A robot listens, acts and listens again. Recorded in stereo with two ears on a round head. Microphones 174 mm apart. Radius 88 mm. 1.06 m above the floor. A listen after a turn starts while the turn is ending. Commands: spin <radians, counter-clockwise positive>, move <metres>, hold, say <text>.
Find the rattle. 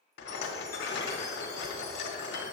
spin 1.05
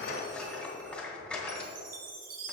say Found it: a rattle, straight ahead.